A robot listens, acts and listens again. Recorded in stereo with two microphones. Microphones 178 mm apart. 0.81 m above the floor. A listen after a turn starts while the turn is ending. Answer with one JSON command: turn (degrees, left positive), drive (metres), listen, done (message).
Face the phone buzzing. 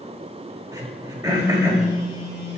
{"turn": 25}
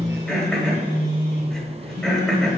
{"turn": 130}
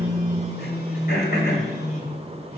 {"turn": 60}
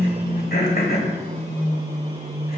{"turn": 15}
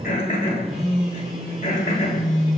{"done": "Facing the phone buzzing."}